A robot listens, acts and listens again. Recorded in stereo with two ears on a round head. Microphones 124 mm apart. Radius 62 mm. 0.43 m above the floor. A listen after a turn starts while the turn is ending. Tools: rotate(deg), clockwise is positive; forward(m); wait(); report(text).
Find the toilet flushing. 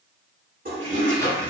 rotate(70)
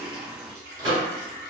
wait()
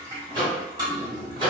rotate(30)
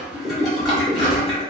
report("Facing the toilet flushing, 1 to 2 m away.")